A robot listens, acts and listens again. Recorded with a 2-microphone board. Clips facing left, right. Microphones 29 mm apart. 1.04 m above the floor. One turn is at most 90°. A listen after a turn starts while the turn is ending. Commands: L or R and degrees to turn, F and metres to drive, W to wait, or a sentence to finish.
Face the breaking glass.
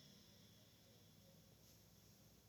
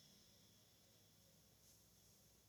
W
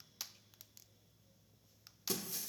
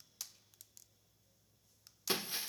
R40
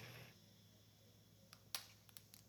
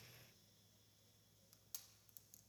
W
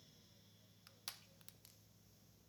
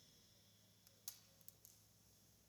I heard breaking glass, but can't make it out now. It was about straight ahead or 100° right.